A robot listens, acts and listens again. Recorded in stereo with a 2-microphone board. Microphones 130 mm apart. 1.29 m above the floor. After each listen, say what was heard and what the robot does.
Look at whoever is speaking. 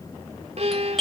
Keep listening.
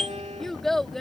Turn 30° left.
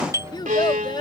So it is at 145° left. Turn 145° left.
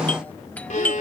Keep listening.
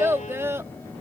The child speaking is now 20° right. Turn 20° right.
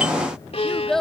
Found it: a child speaking, straight ahead.